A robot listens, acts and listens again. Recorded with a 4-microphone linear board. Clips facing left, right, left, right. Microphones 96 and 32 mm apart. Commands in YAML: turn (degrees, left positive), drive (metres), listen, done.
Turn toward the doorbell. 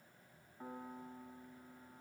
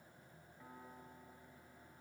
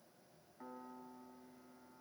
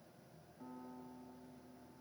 listen: true
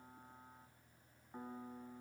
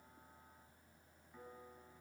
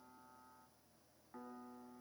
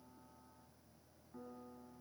listen: true
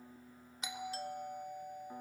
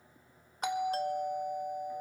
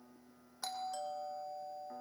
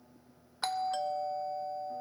turn: -55
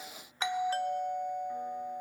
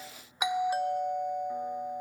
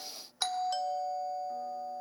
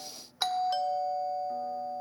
turn: -15
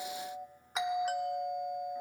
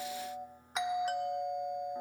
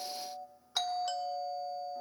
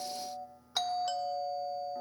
done: "Facing the doorbell."